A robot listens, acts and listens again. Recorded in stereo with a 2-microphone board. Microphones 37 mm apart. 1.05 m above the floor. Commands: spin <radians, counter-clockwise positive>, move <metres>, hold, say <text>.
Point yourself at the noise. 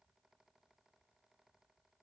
hold
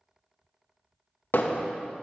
spin 1.05
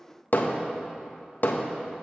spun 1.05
spin 1.05
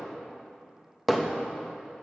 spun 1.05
say Found it: hammering, straight ahead.